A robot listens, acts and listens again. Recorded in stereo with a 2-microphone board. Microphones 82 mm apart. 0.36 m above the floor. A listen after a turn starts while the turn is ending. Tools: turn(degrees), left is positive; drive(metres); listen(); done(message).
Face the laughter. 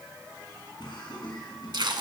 turn(degrees=65)
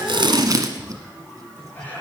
turn(degrees=25)
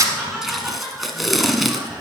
turn(degrees=-15)
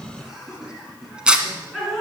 done("Found it: laughter, straight ahead.")